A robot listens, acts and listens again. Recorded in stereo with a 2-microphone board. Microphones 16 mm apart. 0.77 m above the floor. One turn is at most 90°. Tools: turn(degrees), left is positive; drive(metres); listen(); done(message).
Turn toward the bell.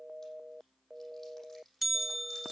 turn(degrees=-30)
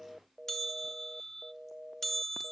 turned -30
turn(degrees=20)
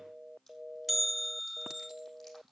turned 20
done("Found it: a bell, straight ahead, under 1 m away.")